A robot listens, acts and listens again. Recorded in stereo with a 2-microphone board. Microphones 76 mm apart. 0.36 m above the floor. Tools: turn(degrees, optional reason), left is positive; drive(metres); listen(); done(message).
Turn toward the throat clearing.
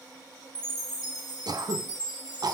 turn(degrees=-60, reason="The throat clearing: about 60° right or 120° right.")
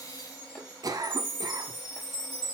turn(degrees=-60, reason="So it is at 60° right.")
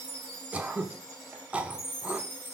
turn(degrees=-20, reason="The throat clearing is now 20° right.")
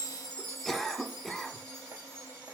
done("Facing the throat clearing.")